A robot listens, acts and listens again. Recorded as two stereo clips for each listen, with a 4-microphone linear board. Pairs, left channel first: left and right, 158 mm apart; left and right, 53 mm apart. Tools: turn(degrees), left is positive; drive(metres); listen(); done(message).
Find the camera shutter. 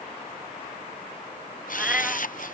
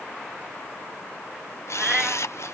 turn(degrees=65)
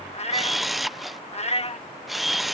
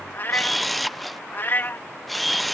done("Facing the camera shutter.")